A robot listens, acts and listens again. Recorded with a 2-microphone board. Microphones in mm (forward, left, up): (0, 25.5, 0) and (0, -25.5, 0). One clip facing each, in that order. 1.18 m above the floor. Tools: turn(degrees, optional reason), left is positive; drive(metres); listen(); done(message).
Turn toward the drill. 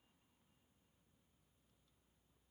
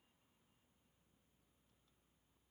listen()
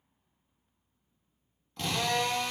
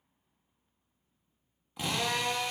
turn(degrees=-30)
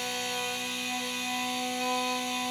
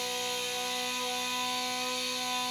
turn(degrees=20, reason="So it is at 20° left.")
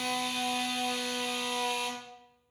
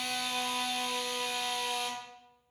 done("Facing the drill.")